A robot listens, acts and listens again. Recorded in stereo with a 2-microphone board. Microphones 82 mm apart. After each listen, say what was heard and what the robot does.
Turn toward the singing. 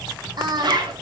The singing: about 60° right or 120° right. Turn 60° right.
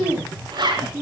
So it is at 20° right. Turn 20° right.
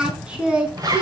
The singing is now 15° right. Turn 15° right.
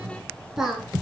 Found it: singing, straight ahead, over 4 m away.